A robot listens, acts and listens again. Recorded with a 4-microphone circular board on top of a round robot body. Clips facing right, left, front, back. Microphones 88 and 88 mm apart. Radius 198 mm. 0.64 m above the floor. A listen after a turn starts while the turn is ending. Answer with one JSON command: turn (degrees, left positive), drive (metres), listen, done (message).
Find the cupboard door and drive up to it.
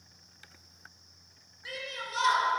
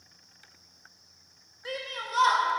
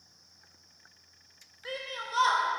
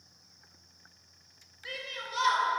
{"listen": true}
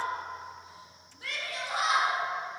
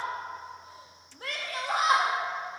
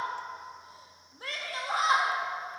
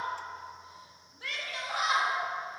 {"listen": true}
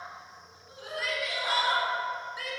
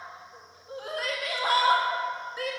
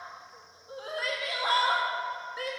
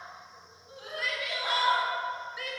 {"done": "I can't make out a cupboard door to turn to."}